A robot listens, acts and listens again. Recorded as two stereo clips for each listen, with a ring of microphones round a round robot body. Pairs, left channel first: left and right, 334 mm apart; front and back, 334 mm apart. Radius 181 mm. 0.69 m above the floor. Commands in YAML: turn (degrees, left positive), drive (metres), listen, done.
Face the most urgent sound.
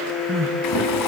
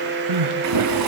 turn: -150
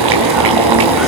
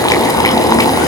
listen: true
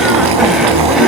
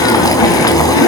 listen: true
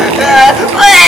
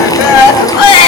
done: "Facing the crying."